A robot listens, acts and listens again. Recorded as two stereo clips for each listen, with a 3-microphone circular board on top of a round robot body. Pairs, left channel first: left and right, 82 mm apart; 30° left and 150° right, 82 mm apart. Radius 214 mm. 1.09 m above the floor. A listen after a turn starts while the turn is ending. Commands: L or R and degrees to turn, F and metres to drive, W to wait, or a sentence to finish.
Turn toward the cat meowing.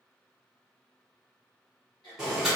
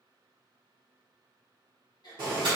W
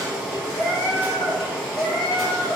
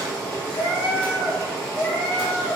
L95
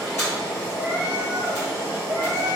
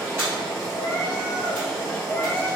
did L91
R25
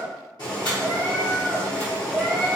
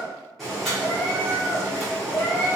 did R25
Found it: a cat meowing, straight ahead.